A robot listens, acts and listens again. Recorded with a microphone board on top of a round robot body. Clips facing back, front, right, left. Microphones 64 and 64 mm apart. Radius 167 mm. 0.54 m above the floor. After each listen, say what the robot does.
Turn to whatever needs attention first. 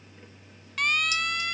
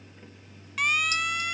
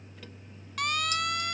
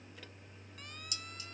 Turn 85° right.
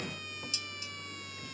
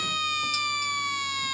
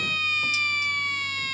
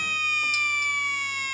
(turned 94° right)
Turn 10° left.
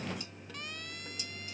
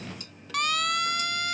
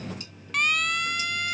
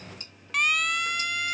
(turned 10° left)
Found it: a siren, straight ahead.